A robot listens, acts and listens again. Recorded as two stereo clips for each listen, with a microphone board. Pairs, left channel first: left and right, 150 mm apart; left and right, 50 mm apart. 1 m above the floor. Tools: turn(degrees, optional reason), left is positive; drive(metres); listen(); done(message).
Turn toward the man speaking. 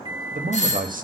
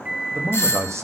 turn(degrees=-65, reason="The man speaking: about 65° right or 115° right.")
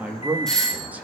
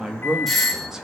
turn(degrees=-10, reason="So it is at 10° right.")
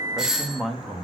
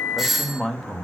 done("Facing the man speaking.")